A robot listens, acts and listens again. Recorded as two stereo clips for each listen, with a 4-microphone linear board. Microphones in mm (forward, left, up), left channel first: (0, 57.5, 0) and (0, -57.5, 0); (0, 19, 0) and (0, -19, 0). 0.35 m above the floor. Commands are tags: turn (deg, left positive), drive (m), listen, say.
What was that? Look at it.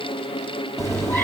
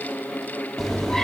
<turn deg="20"/>
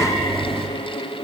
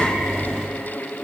<say>Facing the cat meowing.</say>